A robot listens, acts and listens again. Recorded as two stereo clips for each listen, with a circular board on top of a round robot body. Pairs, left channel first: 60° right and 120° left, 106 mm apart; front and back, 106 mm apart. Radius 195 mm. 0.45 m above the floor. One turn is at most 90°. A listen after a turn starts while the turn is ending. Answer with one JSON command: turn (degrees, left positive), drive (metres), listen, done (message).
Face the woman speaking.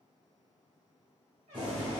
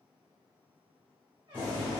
{"listen": true}
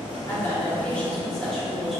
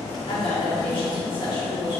{"turn": 30}
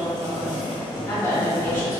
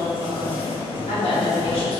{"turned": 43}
{"turn": 10}
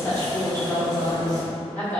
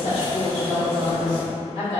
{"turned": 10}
{"turn": 10}
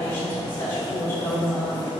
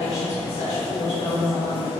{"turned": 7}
{"done": "Facing the woman speaking."}